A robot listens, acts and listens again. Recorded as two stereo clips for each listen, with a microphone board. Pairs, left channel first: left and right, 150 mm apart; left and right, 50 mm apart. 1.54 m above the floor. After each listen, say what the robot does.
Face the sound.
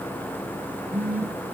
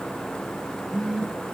Turn 30° right.
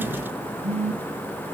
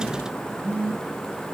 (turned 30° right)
Turn 135° right.
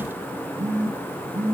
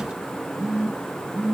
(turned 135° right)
Turn 20° right.
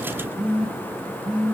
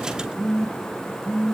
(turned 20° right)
Found it: a phone buzzing, straight ahead, 2 to 4 m away.